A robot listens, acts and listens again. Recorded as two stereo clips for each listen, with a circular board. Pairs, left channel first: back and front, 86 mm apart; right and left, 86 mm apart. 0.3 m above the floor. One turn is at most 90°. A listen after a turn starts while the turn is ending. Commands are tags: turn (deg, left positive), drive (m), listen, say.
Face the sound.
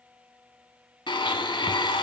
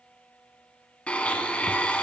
<turn deg="-90"/>
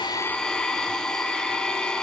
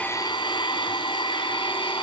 <turn deg="-90"/>
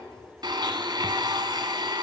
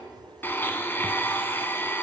<turn deg="-25"/>
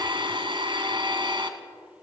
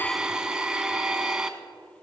<turn deg="10"/>
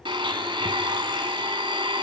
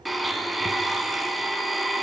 <say>Found it: a blender, straight ahead, 1 to 2 m away.</say>